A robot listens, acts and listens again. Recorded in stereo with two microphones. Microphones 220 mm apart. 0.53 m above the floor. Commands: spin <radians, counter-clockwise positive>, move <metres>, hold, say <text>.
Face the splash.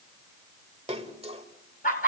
spin -0.52
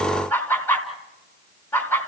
hold
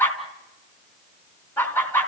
say I heard a splash, but can't make it out now. It was about straight ahead or 120° right.